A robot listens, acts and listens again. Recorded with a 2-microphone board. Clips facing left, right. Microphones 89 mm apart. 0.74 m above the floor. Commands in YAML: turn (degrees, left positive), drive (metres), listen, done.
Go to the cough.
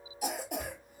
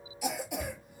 turn: 50
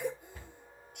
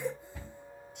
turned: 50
turn: 70
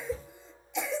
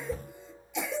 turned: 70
drive: 1.0
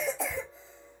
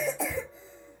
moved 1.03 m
turn: -10
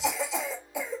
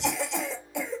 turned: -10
drive: 1.0
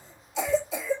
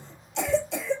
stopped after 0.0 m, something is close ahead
done: "Arrived at the cough, straight ahead."